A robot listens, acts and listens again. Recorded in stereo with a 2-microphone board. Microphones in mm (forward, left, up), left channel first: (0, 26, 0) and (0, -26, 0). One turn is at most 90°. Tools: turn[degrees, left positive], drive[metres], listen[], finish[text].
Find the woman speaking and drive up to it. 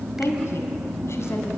Thought: The woman speaking: about 60° left or 120° left.
Action: turn[60]
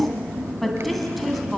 Action: drive[1.0]
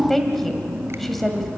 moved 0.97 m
Action: drive[1.0]
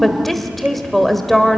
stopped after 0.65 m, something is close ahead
Action: finish[I am next to the woman speaking.]